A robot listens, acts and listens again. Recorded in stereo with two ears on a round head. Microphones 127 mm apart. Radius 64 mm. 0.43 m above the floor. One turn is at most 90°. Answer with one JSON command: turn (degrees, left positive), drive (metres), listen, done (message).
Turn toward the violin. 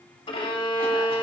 {"turn": 40}
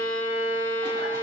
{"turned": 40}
{"turn": 90}
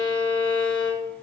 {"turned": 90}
{"turn": 40}
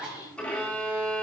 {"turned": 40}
{"turn": 10}
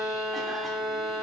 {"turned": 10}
{"done": "Found it: a violin, straight ahead, 1 to 2 m away."}